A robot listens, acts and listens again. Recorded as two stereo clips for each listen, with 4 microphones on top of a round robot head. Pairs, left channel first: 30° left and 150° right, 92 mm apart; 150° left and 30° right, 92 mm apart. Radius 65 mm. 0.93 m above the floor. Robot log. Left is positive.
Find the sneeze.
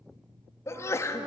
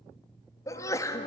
note: The sneeze: 95° left.
cmd yaw +95
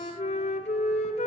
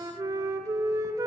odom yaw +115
note: Nothing new. It was at 20° right.
cmd yaw -20
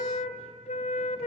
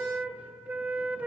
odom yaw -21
end: Facing where the sneeze came from. I can't hear it now.